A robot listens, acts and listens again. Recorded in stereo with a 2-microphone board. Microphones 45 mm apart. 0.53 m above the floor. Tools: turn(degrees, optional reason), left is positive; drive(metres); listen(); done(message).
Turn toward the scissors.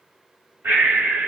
listen()
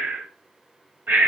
listen()
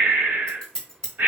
turn(degrees=30)
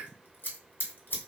turn(degrees=135, reason="So it is at 135° left.")
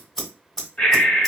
turn(degrees=10, reason="The scissors is now 10° left.")
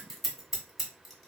done("Found it: scissors, straight ahead, 1 to 2 m away.")